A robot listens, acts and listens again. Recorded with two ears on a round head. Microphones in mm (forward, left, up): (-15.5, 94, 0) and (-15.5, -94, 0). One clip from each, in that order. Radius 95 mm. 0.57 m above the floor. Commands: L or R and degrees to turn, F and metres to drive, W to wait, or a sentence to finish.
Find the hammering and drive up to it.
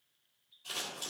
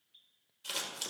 W
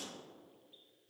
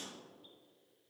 W
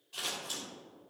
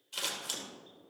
I can't make out hammering to turn to.